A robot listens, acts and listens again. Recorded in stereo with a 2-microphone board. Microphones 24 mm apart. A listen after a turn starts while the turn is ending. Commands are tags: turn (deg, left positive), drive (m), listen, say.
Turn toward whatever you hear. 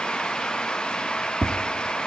<turn deg="30"/>
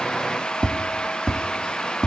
<turn deg="-25"/>
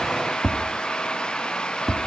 <say>Found it: tapping, straight ahead.</say>